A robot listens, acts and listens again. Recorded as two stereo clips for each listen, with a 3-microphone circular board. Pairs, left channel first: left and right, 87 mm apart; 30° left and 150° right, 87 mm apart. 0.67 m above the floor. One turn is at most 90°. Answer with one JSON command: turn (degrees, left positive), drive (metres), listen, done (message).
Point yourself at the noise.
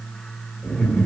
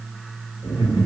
{"turn": 15}
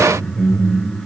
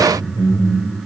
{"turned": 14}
{"done": "Found it: laughter, straight ahead."}